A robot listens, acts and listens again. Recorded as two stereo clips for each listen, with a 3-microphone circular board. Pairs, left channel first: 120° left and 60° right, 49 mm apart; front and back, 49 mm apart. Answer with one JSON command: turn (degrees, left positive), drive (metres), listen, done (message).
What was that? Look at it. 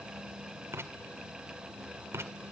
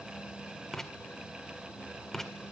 {"turn": -80}
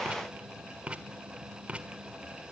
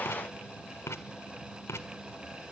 {"done": "Found it: writing, straight ahead, 1 to 2 m away."}